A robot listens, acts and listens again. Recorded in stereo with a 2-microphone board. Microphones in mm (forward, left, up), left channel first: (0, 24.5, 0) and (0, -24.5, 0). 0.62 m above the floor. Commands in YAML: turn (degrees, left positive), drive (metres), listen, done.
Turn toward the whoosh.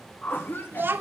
turn: 30
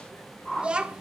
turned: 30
done: "Found it: a whoosh, straight ahead."